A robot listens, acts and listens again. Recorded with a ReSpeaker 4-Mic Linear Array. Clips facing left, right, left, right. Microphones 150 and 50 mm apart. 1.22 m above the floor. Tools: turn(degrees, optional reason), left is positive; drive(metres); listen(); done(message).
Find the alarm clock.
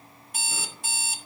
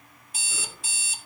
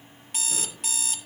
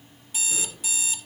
turn(degrees=50, reason="The alarm clock: about 50° left or 130° left.")
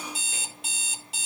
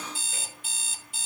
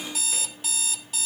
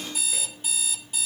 turn(degrees=75, reason="So it is at 75° left.")
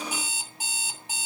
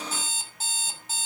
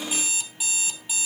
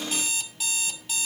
turn(degrees=10, reason="The alarm clock is now 10° left.")
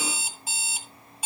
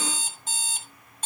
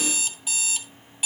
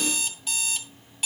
done("Facing the alarm clock, 2 to 4 m away.")